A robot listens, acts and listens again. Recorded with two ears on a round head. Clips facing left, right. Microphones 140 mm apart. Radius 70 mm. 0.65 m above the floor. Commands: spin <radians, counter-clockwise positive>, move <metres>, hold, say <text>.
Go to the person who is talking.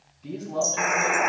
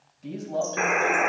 spin -1.05
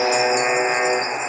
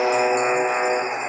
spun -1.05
hold
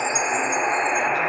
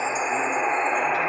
hold
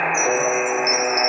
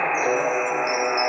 say I heard a man speaking, but can't make it out now. It was about straight ahead or 60° right. I did not reach it.